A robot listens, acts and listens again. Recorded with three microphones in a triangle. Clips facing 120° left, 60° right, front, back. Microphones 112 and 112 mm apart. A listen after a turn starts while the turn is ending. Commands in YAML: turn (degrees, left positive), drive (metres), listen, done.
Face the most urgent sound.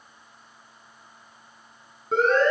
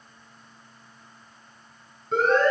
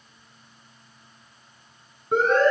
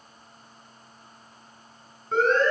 turn: 75
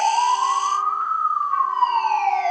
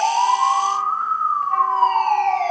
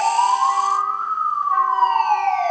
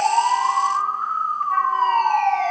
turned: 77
done: "Found it: a siren, straight ahead."